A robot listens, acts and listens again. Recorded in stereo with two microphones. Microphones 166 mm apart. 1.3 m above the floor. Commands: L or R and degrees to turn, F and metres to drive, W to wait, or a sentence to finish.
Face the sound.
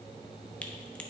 L30
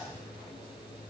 W
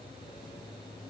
I heard a crack, but can't make it out now. It was about 25° right or 145° left.